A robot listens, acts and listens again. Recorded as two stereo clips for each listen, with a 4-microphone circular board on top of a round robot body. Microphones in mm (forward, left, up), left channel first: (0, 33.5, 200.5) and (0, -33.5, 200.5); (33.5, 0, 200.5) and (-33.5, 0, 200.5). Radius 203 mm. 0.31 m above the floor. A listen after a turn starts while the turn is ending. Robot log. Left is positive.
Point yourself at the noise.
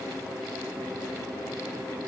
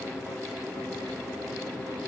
cmd idle
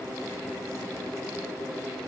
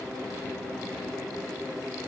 cmd idle
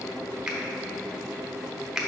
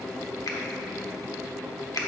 end: Found it: a finger snap, straight ahead.